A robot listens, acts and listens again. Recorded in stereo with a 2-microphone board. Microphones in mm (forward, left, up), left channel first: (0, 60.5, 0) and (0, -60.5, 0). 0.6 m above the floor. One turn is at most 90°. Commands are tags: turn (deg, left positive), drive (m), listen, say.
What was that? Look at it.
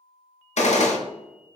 <turn deg="70"/>
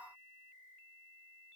<listen/>
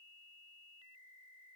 <say>I heard a gunshot, but can't make it out now. It was about straight ahead or 40° left.</say>